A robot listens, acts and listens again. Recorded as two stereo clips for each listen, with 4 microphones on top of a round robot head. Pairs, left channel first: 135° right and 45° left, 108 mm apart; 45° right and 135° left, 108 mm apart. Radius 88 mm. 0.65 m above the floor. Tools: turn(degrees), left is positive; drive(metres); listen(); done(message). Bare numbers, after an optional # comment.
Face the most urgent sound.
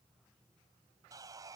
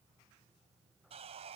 listen()
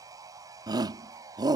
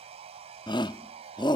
done("Found it: a shout, straight ahead.")